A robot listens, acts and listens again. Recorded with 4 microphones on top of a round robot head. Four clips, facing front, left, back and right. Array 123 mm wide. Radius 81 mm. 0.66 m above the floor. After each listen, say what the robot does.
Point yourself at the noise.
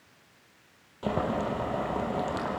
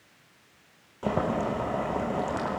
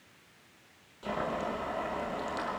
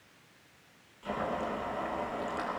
Turn 60° left.
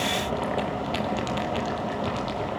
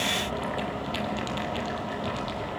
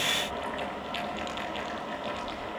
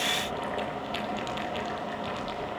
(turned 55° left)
Found it: boiling, straight ahead.